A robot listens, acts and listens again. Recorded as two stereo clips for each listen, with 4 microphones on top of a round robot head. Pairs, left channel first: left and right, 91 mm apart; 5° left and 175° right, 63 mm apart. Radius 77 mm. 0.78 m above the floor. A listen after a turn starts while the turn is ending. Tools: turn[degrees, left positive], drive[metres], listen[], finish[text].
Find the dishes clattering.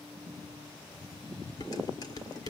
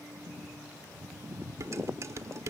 Thought: The dishes clattering: 145° left.
Action: turn[145]
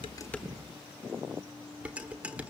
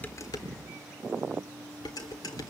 Thought: The dishes clattering is now 15° right.
Action: turn[-15]
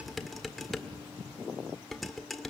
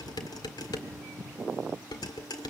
Action: finish[Found it: dishes clattering, straight ahead, 1 to 2 m away.]